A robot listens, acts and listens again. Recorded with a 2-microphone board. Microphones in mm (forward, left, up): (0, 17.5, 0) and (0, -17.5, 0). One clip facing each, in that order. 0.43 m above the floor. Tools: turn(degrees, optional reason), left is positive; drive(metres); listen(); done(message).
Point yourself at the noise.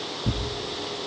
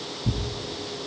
turn(degrees=40, reason="The tearing paper: about 40° left or 140° left.")
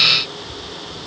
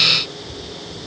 listen()
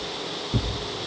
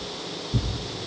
turn(degrees=105, reason="So it is at 105° left.")
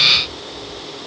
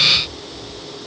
listen()
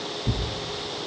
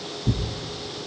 done("Found it: tearing paper, straight ahead, 2 to 4 m away.")